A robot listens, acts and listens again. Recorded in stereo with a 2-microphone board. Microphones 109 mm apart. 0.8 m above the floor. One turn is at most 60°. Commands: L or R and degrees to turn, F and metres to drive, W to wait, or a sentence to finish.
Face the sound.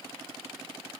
W
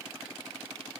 W
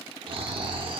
R55
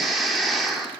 Found it: snoring, straight ahead, 1 to 2 m away.